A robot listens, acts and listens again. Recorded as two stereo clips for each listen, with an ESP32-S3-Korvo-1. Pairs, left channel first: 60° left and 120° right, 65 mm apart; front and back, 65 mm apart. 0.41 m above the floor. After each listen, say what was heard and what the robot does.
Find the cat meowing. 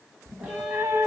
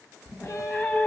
The cat meowing: 75° right. Turn 75° right.
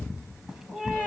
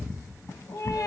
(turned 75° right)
The cat meowing is now 35° right. Turn 35° right.
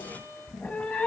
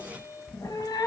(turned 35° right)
The cat meowing is now 10° right. Turn 10° right.
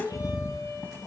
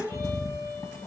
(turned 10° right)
Facing the cat meowing, 1 to 2 m away.